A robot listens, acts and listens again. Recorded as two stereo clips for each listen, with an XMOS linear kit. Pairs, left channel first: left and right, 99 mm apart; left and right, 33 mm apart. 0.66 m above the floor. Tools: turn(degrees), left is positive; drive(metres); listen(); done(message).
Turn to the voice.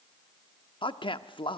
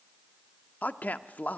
turn(degrees=60)
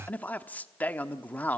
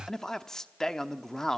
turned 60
turn(degrees=20)
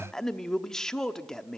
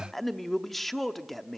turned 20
done("Found it: a man speaking, straight ahead.")